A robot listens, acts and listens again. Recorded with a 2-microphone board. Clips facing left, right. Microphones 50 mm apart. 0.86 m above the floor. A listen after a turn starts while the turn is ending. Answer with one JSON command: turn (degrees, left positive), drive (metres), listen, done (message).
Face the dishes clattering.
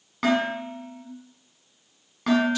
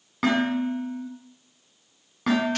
{"turn": -30}
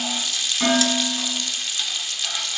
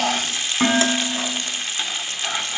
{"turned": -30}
{"turn": -145}
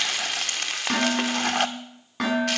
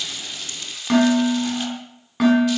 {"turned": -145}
{"done": "Facing the dishes clattering, over 4 m away."}